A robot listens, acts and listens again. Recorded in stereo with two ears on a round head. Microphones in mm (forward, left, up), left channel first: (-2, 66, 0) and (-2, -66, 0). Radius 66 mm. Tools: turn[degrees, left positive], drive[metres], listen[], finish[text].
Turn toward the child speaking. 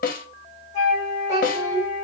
Thought: The child speaking: about 20° right or 160° right.
Action: turn[-20]
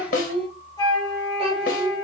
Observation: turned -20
Thought: So it is at 140° right.
Action: turn[-140]
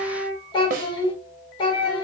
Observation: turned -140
Thought: The child speaking is now 30° left.
Action: turn[30]
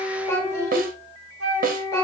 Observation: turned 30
Thought: The child speaking is now 20° left.
Action: turn[20]
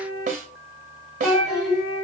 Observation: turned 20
Action: finish[Facing the child speaking.]